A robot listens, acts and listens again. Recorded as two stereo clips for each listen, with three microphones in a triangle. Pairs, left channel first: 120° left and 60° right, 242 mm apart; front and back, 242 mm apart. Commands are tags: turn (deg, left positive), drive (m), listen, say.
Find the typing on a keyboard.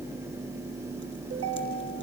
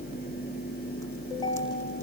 <listen/>
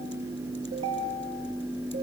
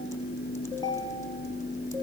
<listen/>
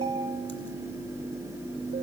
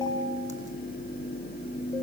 <say>I can't make out typing on a keyboard, only a ringtone.</say>